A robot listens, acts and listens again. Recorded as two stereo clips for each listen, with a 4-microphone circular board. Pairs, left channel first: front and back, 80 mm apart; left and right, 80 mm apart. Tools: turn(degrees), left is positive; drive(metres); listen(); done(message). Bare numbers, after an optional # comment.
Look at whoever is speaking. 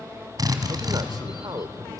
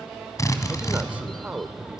# The man speaking: 160° right.
turn(-160)
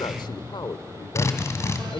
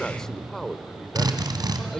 done("Facing the man speaking.")